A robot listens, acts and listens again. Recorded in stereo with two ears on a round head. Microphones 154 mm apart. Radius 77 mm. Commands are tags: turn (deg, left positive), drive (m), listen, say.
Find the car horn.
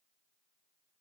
<listen/>
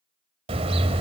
<turn deg="-35"/>
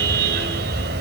<turn deg="-110"/>
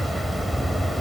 <say>Facing the car horn.</say>